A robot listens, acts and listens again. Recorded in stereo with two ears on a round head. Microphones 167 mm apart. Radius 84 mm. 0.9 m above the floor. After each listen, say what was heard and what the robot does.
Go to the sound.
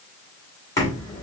The knocking: about 20° left or 160° left. Turn 20° left.
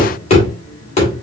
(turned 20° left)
So it is at 145° left. Turn 145° left.
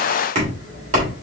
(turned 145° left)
The knocking is now 40° right. Turn 40° right.
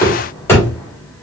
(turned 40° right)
The knocking is now 15° left. Turn 15° left.
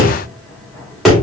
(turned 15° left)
Drive 1.0 m forward.
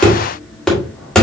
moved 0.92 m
Drive 1.0 m forward.
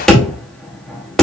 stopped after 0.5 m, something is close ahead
I am next to the knocking.